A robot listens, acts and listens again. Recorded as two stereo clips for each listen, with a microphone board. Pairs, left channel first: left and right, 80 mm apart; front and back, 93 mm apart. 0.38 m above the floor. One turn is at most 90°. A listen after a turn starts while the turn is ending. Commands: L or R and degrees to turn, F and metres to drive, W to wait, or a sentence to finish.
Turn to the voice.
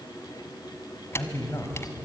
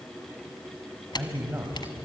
L90
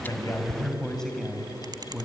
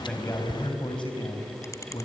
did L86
Found it: a man speaking, straight ahead.